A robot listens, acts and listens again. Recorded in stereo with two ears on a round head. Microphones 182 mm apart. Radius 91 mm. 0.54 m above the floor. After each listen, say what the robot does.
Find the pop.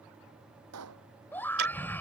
Turn 90° right.
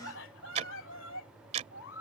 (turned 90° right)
I heard a pop from this way, but can't make it out now.